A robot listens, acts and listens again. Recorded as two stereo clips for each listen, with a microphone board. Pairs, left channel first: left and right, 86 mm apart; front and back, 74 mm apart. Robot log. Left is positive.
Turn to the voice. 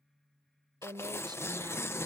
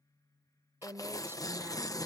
note: The woman speaking: 125° right.
cmd yaw -125
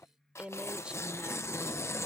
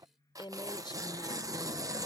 note: The woman speaking is now 10° right.
cmd yaw -10
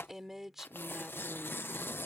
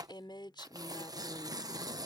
end: Found it: a woman speaking, straight ahead.